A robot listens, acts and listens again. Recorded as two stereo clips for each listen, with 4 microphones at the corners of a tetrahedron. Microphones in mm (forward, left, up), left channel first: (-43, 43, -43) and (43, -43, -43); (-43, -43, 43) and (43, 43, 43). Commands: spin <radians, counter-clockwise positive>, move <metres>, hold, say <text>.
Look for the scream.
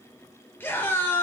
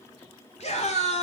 spin -2.71
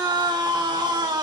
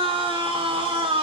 say Facing the scream.